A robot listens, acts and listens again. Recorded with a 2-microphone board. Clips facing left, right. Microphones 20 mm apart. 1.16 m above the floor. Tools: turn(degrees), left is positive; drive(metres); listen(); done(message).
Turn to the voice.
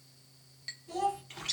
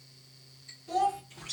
turn(degrees=-50)
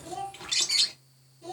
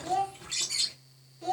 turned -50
turn(degrees=-75)
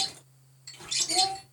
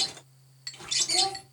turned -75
turn(degrees=15)
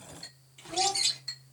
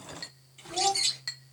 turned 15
done("Facing the child speaking.")